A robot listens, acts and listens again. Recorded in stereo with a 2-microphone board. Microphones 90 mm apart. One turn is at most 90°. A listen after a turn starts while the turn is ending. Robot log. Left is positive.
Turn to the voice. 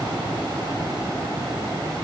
cmd idle
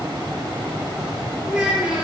cmd yaw -30
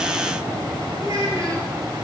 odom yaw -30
note: So it is at 140° right.
cmd yaw -90
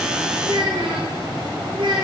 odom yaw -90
note: The child speaking is now 60° right.
cmd yaw -60
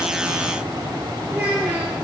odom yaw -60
note: The child speaking is now 15° right.
cmd yaw -15
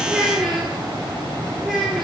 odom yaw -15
end: Facing the child speaking.